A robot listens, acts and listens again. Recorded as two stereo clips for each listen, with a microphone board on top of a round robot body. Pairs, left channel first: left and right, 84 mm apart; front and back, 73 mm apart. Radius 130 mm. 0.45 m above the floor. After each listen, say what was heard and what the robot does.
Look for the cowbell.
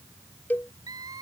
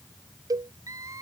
The cowbell: 160° left. Turn 160° left.
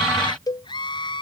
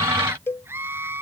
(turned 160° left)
The cowbell is now 55° left. Turn 55° left.
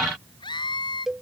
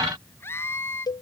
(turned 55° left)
Facing the cowbell.